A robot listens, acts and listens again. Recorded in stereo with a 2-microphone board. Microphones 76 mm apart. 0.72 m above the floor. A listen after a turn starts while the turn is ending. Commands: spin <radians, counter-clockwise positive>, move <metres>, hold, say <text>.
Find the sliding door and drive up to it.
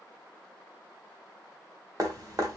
hold
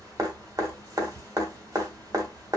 hold
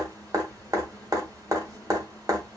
say I can't make out a sliding door, only dripping.